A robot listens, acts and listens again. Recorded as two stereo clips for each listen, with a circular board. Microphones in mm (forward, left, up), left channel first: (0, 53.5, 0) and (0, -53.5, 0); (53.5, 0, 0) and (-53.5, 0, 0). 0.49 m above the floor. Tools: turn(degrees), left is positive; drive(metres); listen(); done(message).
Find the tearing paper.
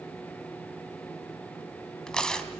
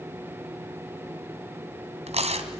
turn(degrees=170)
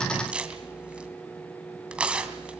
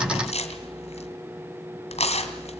turn(degrees=-10)
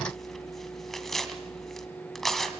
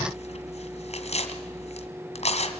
done("Facing the tearing paper, 2 to 4 m away.")